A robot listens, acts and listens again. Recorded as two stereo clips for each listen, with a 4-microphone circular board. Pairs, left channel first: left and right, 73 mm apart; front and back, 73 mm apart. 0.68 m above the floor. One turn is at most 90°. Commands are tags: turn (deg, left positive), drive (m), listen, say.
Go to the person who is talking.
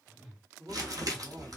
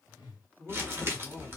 <turn deg="-75"/>
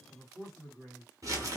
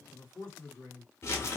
<drive m="1.0"/>
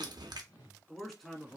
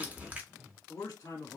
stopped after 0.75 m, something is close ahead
<say>Arrived at the man speaking, straight ahead.</say>